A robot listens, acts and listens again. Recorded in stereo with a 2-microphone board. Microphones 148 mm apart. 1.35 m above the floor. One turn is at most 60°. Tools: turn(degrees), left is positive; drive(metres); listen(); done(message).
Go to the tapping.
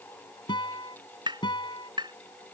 turn(degrees=-30)
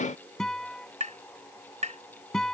turn(degrees=-60)
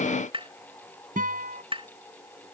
turn(degrees=-45)
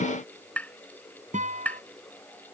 turn(degrees=10)
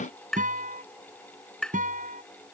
drive(metres=1.0)
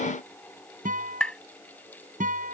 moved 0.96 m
turn(degrees=10)
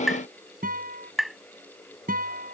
drive(metres=1.0)
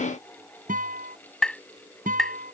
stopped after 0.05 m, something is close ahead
done("Arrived at the tapping, straight ahead.")